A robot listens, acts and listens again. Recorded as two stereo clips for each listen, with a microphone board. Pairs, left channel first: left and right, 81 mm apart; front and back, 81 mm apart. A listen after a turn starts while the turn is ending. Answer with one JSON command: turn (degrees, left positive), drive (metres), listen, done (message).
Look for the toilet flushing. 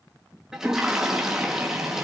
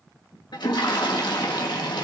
{"turn": -10}
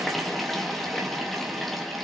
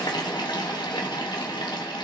{"done": "Found it: a toilet flushing, straight ahead."}